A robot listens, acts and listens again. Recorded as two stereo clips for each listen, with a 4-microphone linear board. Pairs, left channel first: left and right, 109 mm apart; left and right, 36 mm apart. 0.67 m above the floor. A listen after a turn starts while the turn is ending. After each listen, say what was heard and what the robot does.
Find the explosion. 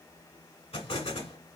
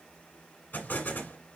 The explosion: about 65° left or 115° left. Turn 65° left.
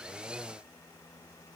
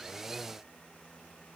Keep listening.
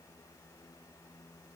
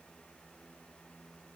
I heard an explosion, but can't make it out now. It was about straight ahead or 50° left.